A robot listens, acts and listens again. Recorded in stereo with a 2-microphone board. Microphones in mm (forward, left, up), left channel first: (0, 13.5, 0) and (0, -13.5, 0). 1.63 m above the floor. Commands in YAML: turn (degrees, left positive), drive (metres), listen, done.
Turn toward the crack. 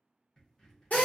turn: 15
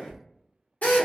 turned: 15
turn: 150
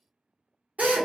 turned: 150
done: "I heard a crack from this way, but can't make it out now."